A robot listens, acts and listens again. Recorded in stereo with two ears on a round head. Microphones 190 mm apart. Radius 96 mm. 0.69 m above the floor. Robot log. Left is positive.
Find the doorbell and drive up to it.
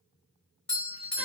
cmd yaw +30
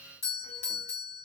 note: So it is at 145° left.
cmd yaw +145
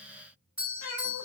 note: The doorbell is now 10° right.
cmd yaw -10
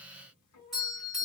cmd fwd 1.0
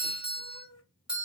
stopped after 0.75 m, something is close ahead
note: The doorbell is now 10° right.
cmd yaw -10
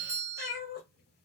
end: Arrived at the doorbell, straight ahead.